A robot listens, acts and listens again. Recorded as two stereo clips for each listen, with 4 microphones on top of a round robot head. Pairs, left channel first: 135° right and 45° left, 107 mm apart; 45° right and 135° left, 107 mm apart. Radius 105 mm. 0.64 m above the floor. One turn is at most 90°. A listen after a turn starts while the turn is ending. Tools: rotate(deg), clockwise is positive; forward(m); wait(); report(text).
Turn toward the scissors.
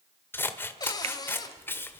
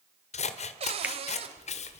rotate(65)
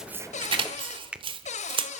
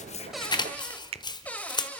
report("Facing the scissors.")